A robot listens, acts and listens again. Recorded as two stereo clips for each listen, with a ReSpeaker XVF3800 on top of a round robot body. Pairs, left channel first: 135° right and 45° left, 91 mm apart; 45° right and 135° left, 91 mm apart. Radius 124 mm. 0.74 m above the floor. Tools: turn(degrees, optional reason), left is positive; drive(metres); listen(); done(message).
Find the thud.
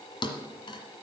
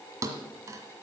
turn(degrees=-170, reason="The thud: 170° right.")
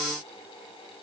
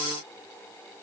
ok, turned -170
done("I heard a thud from this way, but can't make it out now.")